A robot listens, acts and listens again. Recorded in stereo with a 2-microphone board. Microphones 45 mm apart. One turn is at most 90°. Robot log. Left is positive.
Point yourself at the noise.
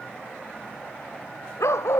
cmd yaw +90
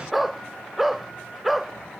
end: Found it: a dog barking, straight ahead.